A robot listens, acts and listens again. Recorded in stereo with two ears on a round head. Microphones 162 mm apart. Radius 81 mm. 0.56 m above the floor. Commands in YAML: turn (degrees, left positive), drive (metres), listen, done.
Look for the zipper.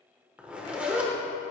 turn: -30
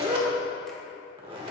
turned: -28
turn: -145
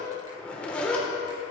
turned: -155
turn: 10
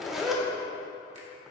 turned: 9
done: "Found it: a zipper, straight ahead."